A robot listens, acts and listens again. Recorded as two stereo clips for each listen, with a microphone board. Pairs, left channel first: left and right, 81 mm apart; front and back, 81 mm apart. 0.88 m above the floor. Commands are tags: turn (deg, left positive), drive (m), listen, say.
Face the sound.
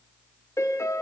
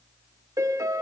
<turn deg="135"/>
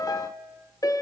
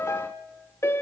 <turn deg="55"/>
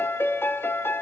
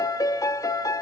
<turn deg="35"/>
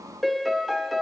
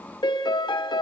<say>Facing the piano.</say>